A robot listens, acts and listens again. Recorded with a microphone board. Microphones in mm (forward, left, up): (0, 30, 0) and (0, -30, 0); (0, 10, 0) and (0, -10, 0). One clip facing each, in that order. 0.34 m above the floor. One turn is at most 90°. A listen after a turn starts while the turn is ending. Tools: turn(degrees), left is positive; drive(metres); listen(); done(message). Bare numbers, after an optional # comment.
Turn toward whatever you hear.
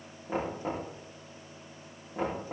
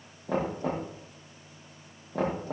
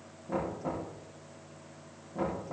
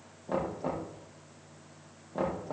turn(-90)
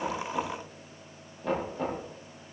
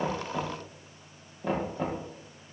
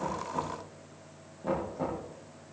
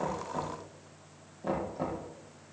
done("Found it: knocking, straight ahead.")